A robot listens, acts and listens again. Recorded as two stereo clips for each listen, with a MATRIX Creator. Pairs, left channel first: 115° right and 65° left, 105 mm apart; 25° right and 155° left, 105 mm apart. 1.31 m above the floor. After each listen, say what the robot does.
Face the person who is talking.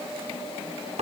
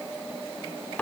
Keep listening.
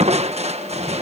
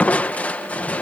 Keep listening.
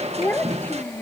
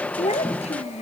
Turn 40° right.
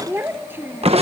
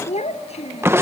Facing the child speaking.